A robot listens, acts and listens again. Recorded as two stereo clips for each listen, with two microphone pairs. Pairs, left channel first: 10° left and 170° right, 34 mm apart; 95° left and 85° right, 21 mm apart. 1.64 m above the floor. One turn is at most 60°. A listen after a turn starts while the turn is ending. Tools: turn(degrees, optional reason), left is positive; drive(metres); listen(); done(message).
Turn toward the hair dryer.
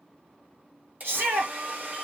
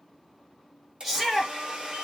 turn(degrees=-60, reason="The hair dryer: 130° right.")
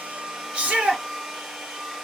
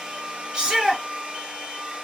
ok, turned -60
turn(degrees=-60, reason="The hair dryer is now 85° right.")
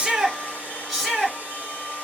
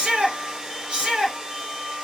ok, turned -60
turn(degrees=-35, reason="The hair dryer is now 35° right.")
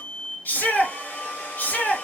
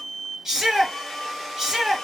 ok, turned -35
turn(degrees=15, reason="The hair dryer is now 15° left.")
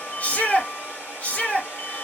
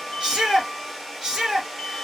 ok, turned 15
done("Found it: a hair dryer, straight ahead.")